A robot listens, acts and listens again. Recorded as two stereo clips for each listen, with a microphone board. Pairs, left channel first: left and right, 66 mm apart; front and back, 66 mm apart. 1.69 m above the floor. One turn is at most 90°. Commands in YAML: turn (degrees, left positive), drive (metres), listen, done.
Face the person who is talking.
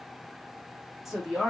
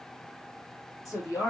done: "Facing the woman speaking."